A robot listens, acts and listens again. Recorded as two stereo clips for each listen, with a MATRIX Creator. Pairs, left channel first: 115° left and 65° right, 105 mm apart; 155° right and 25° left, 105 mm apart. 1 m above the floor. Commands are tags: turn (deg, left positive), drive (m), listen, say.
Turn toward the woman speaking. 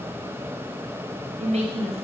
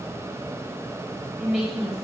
<turn deg="-60"/>
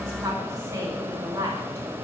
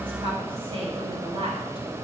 <say>Facing the woman speaking, over 4 m away.</say>